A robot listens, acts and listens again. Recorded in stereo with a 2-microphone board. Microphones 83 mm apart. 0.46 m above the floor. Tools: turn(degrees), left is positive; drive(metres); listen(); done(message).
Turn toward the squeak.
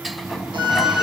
turn(degrees=-30)
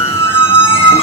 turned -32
turn(degrees=30)
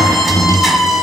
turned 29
done("Found it: a squeak, straight ahead.")